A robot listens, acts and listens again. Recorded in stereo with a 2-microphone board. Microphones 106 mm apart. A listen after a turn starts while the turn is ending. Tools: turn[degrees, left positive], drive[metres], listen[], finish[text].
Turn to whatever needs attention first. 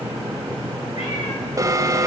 Thought: The alarm: about 35° right or 145° right.
Action: turn[-35]
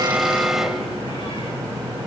Action: finish[Facing the alarm, 1 to 2 m away.]